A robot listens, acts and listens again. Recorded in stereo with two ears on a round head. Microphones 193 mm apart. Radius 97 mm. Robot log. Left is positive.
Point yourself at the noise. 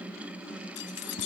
note: The keys jangling: about 65° left or 115° left.
cmd yaw +65
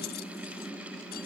cmd idle
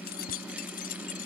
note: So it is at 40° left.
cmd yaw +40
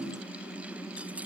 cmd idle
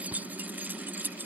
note: The keys jangling is now 10° right.
cmd yaw -10
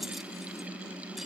cmd idle
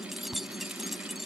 end: Facing the keys jangling.